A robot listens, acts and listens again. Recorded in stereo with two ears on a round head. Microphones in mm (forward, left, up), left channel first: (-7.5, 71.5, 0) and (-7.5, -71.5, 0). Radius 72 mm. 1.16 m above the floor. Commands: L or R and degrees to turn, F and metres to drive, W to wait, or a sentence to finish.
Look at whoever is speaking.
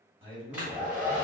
R35
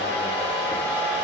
W
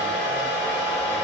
W
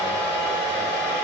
I heard a man speaking, but can't make it out now. It was about straight ahead or 110° right.